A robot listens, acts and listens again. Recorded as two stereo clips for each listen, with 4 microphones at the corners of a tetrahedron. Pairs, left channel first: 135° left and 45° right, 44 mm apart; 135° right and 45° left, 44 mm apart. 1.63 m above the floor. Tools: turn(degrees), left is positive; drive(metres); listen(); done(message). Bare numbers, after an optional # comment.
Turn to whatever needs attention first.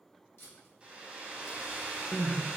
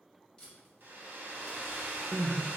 # The crying: 100° left.
turn(100)
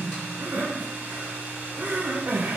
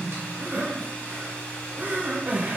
done("Facing the crying, under 1 m away.")